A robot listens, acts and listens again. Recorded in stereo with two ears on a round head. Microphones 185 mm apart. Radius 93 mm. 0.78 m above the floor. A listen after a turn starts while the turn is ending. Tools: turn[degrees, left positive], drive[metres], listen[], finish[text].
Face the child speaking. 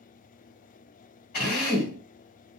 Action: listen[]
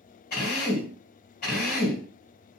Action: listen[]
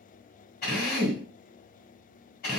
Action: finish[I can't make out a child speaking, only a drill.]